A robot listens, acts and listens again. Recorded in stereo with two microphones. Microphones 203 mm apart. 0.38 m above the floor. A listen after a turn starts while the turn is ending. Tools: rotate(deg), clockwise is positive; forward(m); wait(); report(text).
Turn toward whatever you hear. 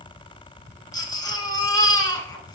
rotate(-20)
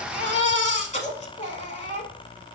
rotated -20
rotate(-145)
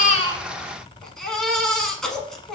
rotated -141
report("Found it: a baby crying, straight ahead.")